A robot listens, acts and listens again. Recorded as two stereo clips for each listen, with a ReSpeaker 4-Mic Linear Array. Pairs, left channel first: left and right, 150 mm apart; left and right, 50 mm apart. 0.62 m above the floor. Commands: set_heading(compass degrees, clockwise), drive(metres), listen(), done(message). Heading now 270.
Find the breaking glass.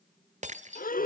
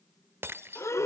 set_heading(325)
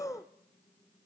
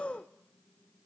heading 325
listen()
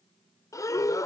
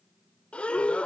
done("I heard breaking glass, but can't make it out now. It was about straight ahead or 70° right.")